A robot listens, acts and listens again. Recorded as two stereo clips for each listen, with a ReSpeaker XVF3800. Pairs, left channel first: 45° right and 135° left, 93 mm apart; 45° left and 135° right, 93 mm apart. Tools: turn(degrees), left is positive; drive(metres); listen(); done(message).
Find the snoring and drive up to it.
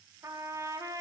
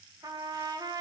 listen()
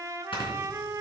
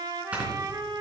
turn(degrees=-60)
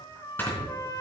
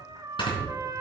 turn(degrees=20)
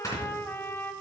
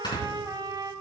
drive(metres=1.0)
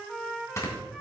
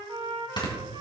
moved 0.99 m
turn(degrees=15)
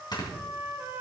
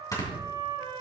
drive(metres=1.0)
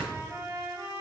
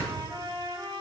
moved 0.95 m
drive(metres=1.0)
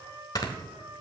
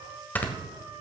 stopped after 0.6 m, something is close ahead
turn(degrees=-20)
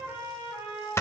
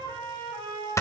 done("I am next to the snoring.")